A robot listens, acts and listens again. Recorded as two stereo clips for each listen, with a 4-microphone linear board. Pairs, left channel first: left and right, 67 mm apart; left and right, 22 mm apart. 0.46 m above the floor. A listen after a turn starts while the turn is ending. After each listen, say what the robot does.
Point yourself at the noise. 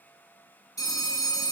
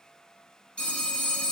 Turn 65° left.
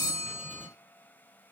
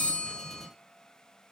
Keep listening.
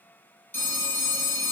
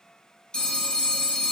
Turn 40° left.
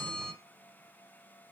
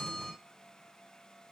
Keep listening.
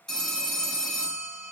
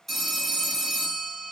Turn 10° left.
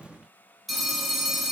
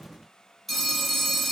Facing the phone ringing.